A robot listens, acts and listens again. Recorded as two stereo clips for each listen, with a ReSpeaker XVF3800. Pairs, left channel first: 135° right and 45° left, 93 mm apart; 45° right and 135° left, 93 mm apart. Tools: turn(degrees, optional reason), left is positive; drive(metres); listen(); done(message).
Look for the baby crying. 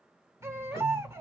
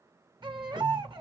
turn(degrees=100, reason="The baby crying: 100° left.")
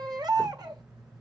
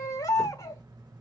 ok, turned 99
done("Found it: a baby crying, straight ahead, 1 to 2 m away.")